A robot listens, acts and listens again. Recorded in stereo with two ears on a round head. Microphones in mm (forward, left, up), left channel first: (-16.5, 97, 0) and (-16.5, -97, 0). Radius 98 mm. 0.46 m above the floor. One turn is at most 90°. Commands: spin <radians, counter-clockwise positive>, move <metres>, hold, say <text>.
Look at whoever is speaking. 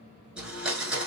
hold
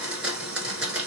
hold
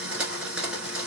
say I can't make out anyone speaking to turn to.